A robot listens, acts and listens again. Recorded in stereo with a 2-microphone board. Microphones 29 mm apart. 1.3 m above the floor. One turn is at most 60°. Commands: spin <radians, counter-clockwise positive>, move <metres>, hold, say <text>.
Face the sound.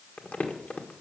spin 1.05
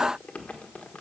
spin 0.87
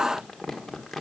say Found it: crumpling, straight ahead, 1 to 2 m away.